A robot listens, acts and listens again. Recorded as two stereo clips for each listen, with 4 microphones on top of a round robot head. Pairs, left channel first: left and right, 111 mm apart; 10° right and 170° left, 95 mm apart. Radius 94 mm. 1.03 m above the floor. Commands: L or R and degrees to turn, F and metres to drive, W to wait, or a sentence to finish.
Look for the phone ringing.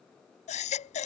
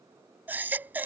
W
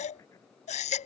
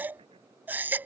W
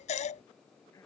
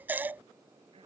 I can't make out a phone ringing, only a baby crying.